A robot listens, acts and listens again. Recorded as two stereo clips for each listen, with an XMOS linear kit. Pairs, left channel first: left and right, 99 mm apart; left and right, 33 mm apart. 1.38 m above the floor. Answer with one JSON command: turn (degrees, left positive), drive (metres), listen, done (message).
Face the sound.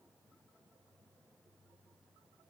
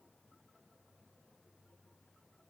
{"listen": true}
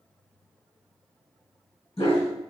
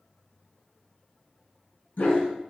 {"turn": 65}
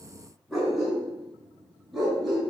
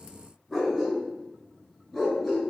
{"done": "Found it: a dog barking, straight ahead, over 4 m away."}